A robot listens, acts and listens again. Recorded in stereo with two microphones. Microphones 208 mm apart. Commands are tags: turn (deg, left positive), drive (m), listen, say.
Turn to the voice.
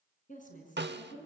<turn deg="40"/>
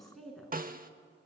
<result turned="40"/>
<say>Found it: a woman speaking, straight ahead.</say>